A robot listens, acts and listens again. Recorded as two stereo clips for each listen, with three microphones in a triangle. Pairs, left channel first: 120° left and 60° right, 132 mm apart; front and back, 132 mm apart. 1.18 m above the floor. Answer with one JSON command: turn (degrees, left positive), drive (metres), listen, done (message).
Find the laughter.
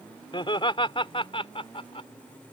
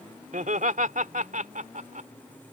{"turn": 165}
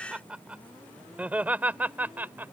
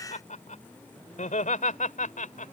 {"turn": 15}
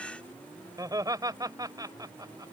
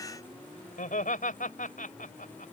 {"done": "Found it: laughter, straight ahead."}